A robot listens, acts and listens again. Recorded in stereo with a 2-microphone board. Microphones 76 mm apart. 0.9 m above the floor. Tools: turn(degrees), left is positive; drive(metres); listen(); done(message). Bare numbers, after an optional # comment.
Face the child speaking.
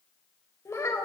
# The child speaking: about 40° left or 140° left.
turn(40)
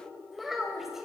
done("Found it: a child speaking, straight ahead.")